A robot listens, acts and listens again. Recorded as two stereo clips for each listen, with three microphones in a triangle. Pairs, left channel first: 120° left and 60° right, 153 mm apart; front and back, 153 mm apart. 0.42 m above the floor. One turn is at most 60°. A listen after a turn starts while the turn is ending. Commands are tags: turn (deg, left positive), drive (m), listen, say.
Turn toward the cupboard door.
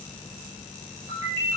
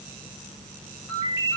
<listen/>
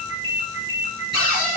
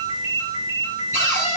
<turn deg="-60"/>
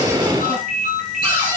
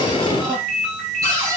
<turn deg="-60"/>
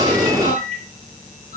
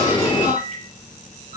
<turn deg="-55"/>
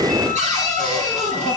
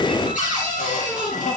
<turn deg="-20"/>
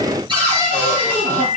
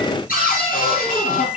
<say>Found it: a cupboard door, straight ahead, over 4 m away.</say>